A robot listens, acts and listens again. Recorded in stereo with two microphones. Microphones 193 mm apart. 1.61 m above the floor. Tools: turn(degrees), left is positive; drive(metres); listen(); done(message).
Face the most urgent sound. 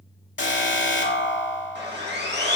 turn(degrees=70)
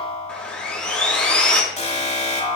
turn(degrees=35)
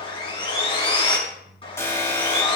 turn(degrees=15)
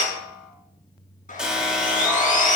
done("Found it: an alarm, straight ahead.")